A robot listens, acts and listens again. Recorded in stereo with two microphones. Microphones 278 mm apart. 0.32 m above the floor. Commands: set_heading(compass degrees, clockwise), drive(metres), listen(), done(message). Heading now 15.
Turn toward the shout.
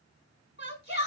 set_heading(335)
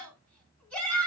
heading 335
done("Found it: a shout, straight ahead.")